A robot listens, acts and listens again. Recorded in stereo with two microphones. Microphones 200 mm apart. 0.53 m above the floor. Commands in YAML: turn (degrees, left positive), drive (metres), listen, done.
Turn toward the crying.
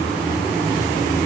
listen: true
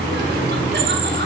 listen: true
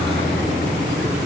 done: "I can't make out crying to turn to."